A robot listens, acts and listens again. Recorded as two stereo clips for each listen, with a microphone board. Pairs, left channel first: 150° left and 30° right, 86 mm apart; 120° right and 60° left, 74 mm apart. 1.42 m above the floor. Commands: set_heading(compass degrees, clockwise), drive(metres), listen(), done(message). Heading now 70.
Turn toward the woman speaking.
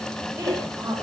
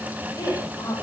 set_heading(155)
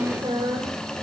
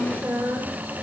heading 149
done("Facing the woman speaking, over 4 m away.")